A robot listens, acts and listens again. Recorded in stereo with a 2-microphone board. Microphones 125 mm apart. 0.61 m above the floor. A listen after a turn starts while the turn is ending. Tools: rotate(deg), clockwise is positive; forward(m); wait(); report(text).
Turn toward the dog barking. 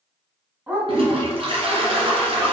rotate(30)
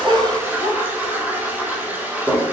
rotate(-20)
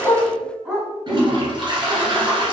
report("Found it: a dog barking, straight ahead, 1 to 2 m away.")